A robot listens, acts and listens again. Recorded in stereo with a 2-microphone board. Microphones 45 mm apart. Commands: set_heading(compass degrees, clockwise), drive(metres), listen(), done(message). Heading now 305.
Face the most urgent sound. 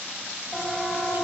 set_heading(275)
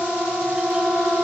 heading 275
set_heading(290)
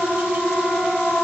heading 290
done("Found it: a siren, straight ahead.")